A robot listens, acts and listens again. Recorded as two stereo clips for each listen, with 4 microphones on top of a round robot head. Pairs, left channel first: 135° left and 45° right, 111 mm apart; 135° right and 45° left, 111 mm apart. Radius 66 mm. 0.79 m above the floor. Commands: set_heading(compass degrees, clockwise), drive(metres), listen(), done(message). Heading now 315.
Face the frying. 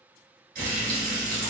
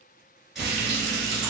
set_heading(0)
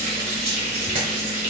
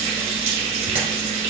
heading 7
done("Found it: frying, straight ahead, 1 to 2 m away.")